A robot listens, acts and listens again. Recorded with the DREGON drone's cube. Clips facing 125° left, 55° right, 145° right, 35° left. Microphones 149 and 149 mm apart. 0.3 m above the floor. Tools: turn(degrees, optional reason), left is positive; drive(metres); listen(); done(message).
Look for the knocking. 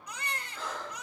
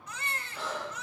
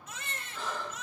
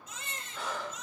listen()
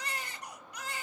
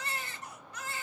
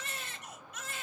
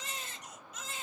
listen()
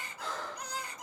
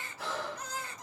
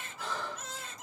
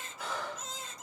done("I can't make out knocking, only breathing and a baby crying.")